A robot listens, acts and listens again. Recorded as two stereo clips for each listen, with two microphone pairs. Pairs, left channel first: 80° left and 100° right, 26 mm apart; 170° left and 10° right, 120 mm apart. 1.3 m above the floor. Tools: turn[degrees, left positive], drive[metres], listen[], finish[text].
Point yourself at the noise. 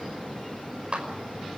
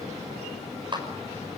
Thought: The clap: 60° right.
Action: turn[-60]
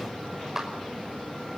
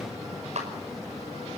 Thought: The clap is now 25° right.
Action: turn[-25]
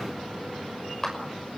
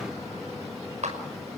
Action: finish[Found it: a clap, straight ahead.]